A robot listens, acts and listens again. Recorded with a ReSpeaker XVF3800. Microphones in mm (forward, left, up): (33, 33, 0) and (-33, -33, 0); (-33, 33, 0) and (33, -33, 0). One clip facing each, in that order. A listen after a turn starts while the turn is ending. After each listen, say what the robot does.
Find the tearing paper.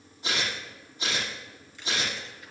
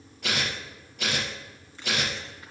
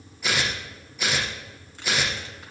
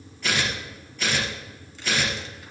Turn 145° right.
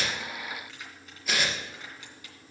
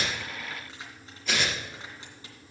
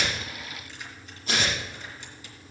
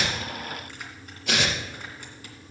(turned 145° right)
Turn 40° right.
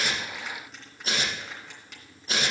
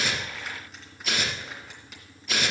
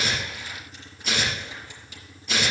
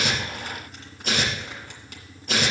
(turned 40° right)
Turn 10° right.
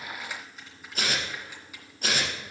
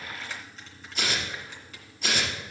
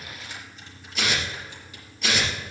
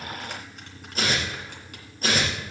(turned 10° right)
Facing the tearing paper.